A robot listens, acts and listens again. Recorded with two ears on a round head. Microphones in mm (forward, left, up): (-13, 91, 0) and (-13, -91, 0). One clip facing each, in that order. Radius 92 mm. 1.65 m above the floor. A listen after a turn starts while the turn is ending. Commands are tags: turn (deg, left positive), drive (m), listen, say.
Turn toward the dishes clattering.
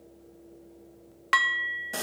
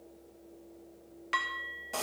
<turn deg="65"/>
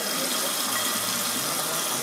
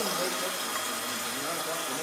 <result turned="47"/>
<listen/>
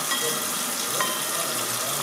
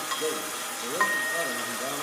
<turn deg="35"/>
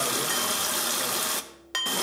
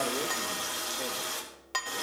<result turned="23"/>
<turn deg="15"/>
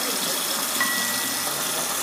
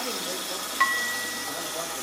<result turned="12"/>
<say>Facing the dishes clattering.</say>